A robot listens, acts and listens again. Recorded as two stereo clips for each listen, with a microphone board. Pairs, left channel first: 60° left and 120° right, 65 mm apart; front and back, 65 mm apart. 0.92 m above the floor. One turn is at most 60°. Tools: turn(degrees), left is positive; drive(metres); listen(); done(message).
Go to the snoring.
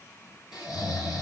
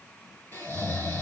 turn(degrees=60)
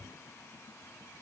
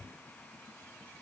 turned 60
listen()
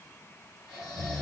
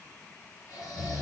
turn(degrees=-10)
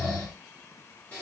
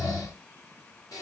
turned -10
drive(metres=1.0)
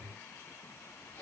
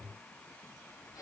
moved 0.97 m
listen()
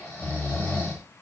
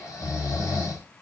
drive(metres=1.0)
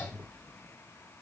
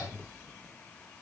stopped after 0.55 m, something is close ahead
listen()
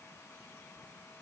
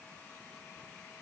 listen()
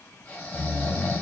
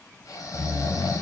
done("Arrived at the snoring, straight ahead.")